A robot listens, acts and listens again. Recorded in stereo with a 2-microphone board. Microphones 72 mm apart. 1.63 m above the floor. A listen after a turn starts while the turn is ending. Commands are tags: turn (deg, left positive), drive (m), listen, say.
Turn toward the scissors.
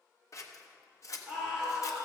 <turn deg="45"/>
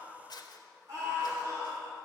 <turn deg="85"/>
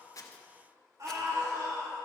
<listen/>
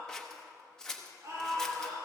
<turn deg="10"/>
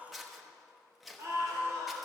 <say>Facing the scissors, 1 to 2 m away.</say>